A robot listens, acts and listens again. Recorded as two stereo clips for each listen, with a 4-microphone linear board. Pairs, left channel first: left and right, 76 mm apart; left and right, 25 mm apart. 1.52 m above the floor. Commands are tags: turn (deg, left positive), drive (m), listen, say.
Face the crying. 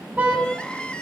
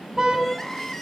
<turn deg="30"/>
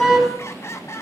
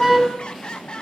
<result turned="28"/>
<turn deg="140"/>
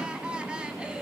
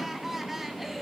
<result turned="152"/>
<turn deg="-15"/>
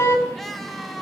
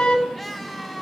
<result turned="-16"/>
<say>Found it: crying, straight ahead, 2 to 4 m away.</say>